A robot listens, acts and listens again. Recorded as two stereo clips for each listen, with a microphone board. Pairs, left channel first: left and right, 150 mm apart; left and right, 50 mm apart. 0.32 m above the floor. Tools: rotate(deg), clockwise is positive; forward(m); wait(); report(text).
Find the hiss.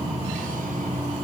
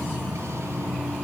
wait()
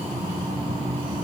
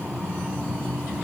wait()
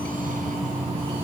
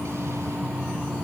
report("I can't make out a hiss to turn to.")